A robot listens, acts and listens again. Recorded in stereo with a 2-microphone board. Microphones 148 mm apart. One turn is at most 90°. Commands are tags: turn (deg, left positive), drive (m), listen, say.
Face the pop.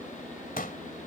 <turn deg="65"/>
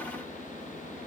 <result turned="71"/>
<listen/>
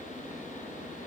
<say>I heard a pop, but can't make it out now. It was about 5° right or 45° left.</say>